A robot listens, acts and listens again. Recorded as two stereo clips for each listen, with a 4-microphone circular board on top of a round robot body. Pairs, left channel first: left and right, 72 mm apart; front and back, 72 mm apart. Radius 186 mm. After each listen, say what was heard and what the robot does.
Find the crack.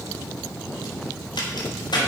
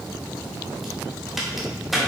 The crack: 90° left. Turn 90° left.
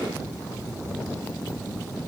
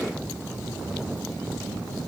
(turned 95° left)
Facing where the crack came from. I can't hear it now.